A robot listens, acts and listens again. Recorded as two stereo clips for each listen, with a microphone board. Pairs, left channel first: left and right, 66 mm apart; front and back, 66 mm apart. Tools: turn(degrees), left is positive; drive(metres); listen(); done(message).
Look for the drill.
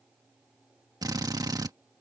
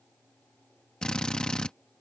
turn(degrees=-80)
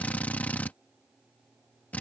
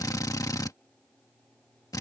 turn(degrees=25)
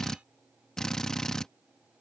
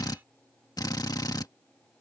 turn(degrees=10)
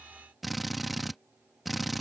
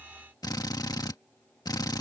done("Facing the drill.")